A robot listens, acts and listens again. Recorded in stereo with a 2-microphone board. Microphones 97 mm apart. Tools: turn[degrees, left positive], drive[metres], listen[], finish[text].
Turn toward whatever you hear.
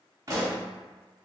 Thought: The pop: about 35° right or 145° right.
Action: turn[-35]
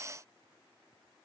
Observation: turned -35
Action: listen[]
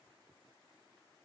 Action: finish[I heard a pop, but can't make it out now. It was about straight ahead or 110° right.]